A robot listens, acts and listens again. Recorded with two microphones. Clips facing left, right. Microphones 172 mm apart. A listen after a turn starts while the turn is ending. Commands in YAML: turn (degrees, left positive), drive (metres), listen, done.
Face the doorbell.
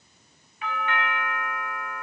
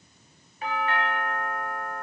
turn: -40
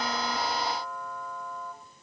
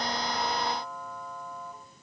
done: "Found it: a doorbell, straight ahead, under 1 m away."